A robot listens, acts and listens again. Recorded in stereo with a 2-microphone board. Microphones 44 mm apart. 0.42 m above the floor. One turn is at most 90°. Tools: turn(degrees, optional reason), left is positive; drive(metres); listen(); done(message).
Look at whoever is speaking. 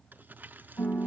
listen()
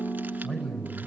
turn(degrees=15, reason="The man speaking: about 15° left or 165° left.")
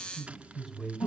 done("Facing the man speaking, 2 to 4 m away.")